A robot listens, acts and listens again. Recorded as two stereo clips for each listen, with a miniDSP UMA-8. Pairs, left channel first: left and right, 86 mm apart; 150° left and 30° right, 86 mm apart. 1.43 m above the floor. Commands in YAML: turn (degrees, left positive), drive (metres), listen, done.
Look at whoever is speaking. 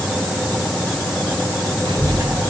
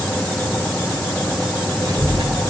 turn: -75
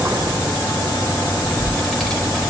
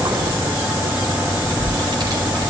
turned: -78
done: "Facing the child speaking, over 4 m away."